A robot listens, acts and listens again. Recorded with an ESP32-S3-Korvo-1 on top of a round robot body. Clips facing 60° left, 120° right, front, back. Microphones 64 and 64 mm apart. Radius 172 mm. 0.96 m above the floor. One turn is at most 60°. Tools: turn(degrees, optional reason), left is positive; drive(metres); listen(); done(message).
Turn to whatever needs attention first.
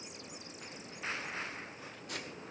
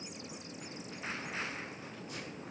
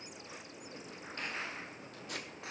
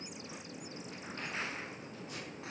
listen()
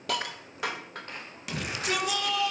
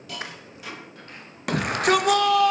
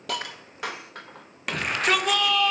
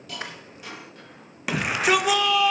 turn(degrees=-60, reason="The shout: 95° right.")
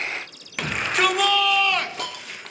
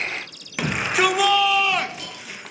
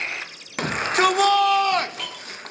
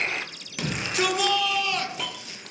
turn(degrees=-35, reason="The shout is now 35° right.")
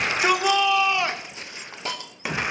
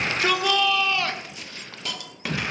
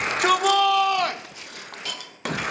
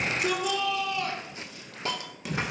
turn(degrees=-10, reason="The shout is now 10° right.")
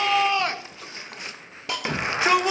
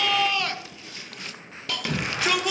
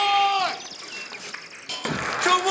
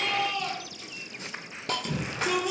done("Found it: a shout, straight ahead.")